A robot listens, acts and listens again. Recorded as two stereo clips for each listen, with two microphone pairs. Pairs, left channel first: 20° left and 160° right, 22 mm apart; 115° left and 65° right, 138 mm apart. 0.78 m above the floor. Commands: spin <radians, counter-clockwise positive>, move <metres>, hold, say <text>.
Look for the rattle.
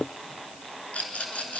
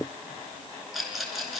spin 0.44
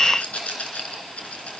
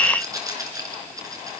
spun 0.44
say Found it: a rattle, straight ahead.